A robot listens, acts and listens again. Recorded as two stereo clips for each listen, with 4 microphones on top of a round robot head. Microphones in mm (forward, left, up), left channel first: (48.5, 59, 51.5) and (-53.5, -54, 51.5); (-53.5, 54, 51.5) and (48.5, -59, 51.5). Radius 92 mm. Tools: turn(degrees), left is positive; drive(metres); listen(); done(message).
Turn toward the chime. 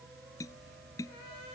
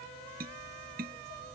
listen()
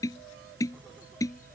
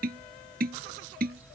listen()
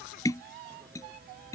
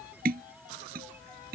done("I can't make out a chime, only tapping.")